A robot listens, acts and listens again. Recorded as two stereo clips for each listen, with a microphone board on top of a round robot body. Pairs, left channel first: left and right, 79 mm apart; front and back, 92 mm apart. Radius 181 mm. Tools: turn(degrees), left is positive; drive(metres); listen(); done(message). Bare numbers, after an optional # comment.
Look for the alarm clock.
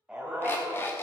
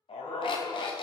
# The alarm clock: 30° left.
turn(30)
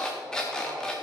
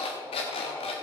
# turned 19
# The alarm clock is now 10° left.
turn(10)
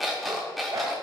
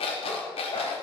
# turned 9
done("Found it: an alarm clock, straight ahead, under 1 m away.")